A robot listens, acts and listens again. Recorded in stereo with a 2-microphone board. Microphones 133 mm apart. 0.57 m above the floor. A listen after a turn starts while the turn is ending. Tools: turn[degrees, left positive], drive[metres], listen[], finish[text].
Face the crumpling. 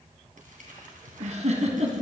Action: turn[-90]
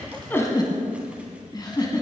Action: listen[]
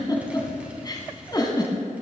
Action: listen[]
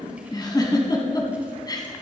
Action: finish[I heard crumpling from this way, but can't make it out now.]